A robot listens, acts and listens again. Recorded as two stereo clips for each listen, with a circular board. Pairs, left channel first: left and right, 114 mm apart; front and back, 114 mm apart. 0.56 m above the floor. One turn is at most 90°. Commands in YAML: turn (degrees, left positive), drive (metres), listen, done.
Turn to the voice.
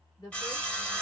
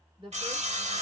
turn: 90
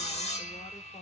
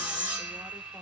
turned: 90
turn: 50
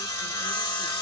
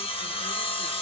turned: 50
listen: true
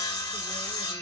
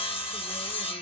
done: "Facing where the woman speaking came from. I can't hear it now."